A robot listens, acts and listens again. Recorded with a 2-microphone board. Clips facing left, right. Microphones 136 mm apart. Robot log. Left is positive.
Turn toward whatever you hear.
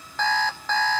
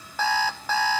cmd yaw -30
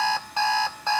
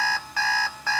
note: So it is at 25° left.
cmd yaw +25
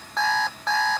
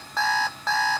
end: Facing the alarm clock, under 1 m away.